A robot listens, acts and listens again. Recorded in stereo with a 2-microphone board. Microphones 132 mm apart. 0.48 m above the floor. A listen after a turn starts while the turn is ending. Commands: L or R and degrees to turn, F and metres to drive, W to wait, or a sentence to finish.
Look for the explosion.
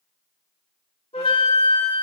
W
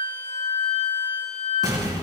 R30
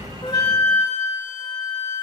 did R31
W
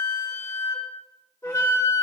I heard an explosion, but can't make it out now. It was about straight ahead or 120° right.